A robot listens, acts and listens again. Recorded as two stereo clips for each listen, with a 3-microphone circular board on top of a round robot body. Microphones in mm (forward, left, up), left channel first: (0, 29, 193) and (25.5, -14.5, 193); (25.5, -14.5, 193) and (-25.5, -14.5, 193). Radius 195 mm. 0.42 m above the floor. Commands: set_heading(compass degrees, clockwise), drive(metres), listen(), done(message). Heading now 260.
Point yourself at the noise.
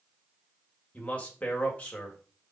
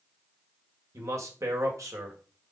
set_heading(75)
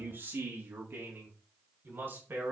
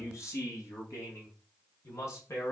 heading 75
set_heading(85)
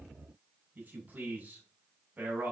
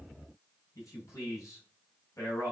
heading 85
done("Facing the man speaking, over 4 m away.")